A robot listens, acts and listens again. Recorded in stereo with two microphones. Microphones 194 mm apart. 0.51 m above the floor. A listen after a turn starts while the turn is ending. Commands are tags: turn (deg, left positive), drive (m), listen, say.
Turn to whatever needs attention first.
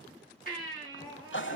<turn deg="45"/>
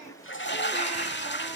<listen/>
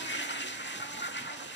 <listen/>
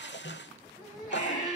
<say>Found it: a baby crying, straight ahead, over 4 m away.</say>